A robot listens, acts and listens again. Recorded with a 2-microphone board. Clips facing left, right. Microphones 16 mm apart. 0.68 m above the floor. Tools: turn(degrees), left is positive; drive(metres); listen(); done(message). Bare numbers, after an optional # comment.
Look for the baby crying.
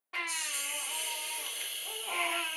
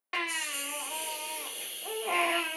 turn(-90)
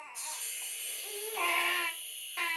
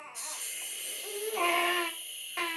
done("Facing the baby crying, under 1 m away.")